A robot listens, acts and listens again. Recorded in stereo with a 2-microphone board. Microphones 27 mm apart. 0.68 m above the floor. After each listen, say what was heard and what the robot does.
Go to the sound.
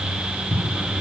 Turn 90° right.
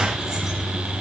Keep listening.
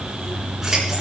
Keep listening.
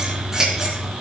The scissors is now 15° right. Turn 15° right.
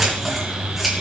Drive 1.0 m forward.
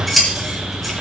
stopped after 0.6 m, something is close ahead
Something is in my way. I am facing the scissors but have not reached it.